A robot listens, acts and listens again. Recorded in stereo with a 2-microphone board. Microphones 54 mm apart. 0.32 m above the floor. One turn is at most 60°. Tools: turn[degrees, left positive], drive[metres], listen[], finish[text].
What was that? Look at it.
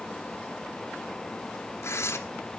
Thought: The tearing paper: about 65° left or 115° left.
Action: turn[60]
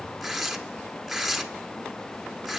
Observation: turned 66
Action: finish[Facing the tearing paper.]